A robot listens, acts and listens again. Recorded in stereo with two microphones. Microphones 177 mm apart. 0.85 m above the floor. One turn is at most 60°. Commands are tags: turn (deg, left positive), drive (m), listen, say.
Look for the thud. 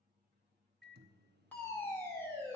<listen/>
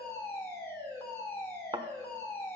<turn deg="-25"/>
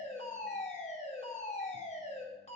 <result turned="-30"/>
<listen/>
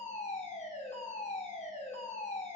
<say>I heard a thud, but can't make it out now. It was about 5° left or 125° right.</say>